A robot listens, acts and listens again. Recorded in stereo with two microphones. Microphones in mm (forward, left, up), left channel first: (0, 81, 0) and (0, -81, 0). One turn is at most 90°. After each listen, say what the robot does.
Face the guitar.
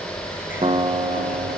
Turn 35° right.
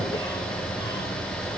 Keep listening.
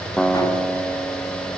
Facing the guitar, 1 to 2 m away.